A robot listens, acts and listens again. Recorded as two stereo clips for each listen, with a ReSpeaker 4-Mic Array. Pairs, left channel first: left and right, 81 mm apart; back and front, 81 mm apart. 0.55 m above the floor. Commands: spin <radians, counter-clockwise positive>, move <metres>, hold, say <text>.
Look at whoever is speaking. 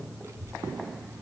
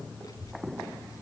spin -2.44
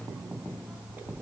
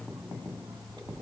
spin -0.35
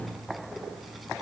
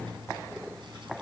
say Facing the child speaking, 2 to 4 m away.